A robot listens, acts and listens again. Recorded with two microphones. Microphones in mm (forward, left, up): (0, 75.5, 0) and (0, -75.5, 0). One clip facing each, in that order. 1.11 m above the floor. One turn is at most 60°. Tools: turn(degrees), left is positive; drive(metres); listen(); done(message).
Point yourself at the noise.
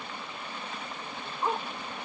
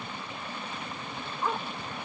turn(degrees=20)
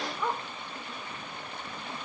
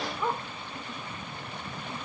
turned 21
done("Facing the dog barking.")